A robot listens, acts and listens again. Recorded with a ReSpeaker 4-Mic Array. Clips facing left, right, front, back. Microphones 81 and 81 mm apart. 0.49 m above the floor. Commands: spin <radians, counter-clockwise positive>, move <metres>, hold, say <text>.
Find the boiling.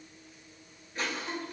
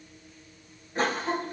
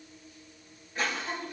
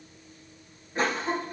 hold
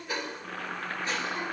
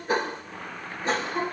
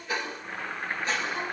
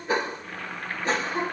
spin 1.31
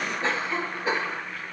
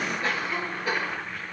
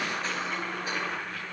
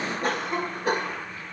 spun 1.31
say Found it: boiling, straight ahead.